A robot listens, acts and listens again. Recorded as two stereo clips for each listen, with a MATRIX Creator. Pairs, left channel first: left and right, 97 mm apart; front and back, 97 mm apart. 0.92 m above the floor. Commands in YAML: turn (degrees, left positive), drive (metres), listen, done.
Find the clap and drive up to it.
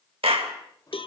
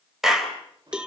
turn: -95
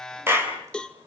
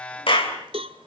turn: -25
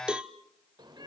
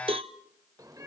listen: true
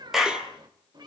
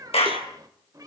drive: 1.0
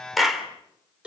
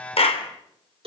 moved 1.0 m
drive: 1.0
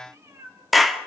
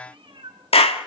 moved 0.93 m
drive: 1.0
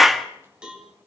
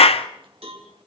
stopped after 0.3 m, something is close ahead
done: "I am next to the clap."